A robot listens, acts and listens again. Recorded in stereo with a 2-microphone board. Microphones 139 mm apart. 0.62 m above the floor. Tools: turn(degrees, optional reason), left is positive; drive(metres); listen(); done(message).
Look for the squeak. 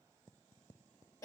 listen()
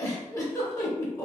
listen()
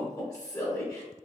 done("I can't make out a squeak, only a giggle.")